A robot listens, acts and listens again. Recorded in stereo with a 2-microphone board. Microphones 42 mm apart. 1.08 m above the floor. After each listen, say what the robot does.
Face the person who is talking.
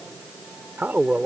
Turn 60° right.
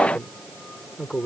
Found it: a man speaking, straight ahead.